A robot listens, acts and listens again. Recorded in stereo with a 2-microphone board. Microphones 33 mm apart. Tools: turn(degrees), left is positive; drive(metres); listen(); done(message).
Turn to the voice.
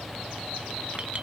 listen()
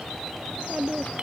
turn(degrees=-40)
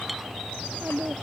turn(degrees=-100)
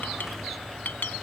listen()
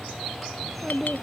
done("Facing the child speaking.")